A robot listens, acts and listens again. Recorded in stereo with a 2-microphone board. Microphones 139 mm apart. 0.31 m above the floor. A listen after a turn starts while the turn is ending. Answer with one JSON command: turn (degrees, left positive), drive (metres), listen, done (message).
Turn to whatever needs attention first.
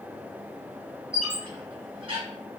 {"listen": true}
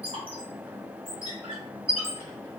{"listen": true}
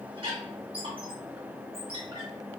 {"done": "I can't make out anything urgent, only a squeak."}